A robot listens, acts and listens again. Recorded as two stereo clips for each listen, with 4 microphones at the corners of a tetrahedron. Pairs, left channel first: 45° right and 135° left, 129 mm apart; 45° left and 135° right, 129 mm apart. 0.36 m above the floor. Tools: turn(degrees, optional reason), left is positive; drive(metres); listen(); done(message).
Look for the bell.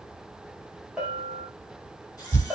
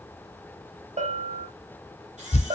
turn(degrees=-140, reason="The bell: 140° right.")
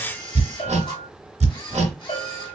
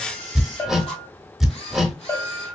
turn(degrees=-25, reason="The bell is now 25° right.")
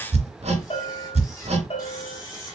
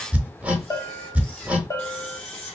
turn(degrees=-15, reason="The bell is now 15° right.")
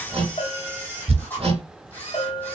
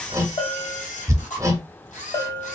done("Facing the bell, 1 to 2 m away.")